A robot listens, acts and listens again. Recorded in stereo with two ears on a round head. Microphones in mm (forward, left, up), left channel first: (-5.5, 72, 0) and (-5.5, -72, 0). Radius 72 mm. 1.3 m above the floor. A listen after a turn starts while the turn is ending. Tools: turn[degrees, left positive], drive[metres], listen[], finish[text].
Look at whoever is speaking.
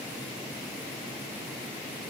Action: listen[]
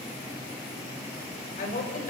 Thought: The woman speaking: about 50° left or 130° left.
Action: turn[50]
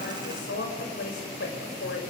Thought: So it is at 75° left.
Action: turn[75]
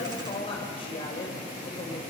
Thought: The woman speaking is now 35° left.
Action: turn[35]
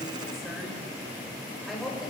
Action: finish[Found it: a woman speaking, straight ahead.]